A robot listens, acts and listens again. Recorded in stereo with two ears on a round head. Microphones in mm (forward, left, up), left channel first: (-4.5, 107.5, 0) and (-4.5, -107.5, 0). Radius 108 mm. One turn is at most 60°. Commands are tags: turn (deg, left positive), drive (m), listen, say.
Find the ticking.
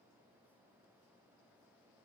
<listen/>
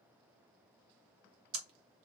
<turn deg="-60"/>
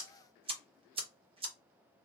<turn deg="-25"/>
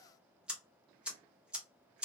<say>Found it: ticking, straight ahead.</say>